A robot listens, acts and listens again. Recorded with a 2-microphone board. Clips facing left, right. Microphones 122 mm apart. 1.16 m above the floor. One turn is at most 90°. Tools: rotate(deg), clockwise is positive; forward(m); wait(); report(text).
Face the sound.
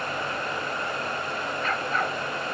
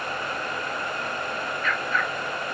rotate(-35)
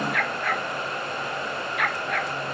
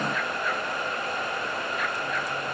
rotate(-90)
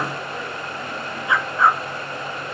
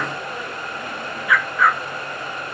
rotate(-25)
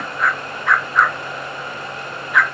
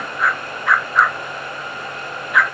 report("Found it: a dog barking, straight ahead.")